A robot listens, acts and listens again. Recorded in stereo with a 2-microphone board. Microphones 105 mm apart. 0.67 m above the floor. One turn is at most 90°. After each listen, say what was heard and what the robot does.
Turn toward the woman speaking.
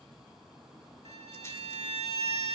Keep listening.
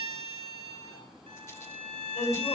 Turn 90° left.
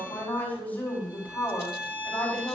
So it is at 15° left. Turn 15° left.
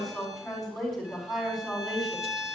Found it: a woman speaking, straight ahead, over 4 m away.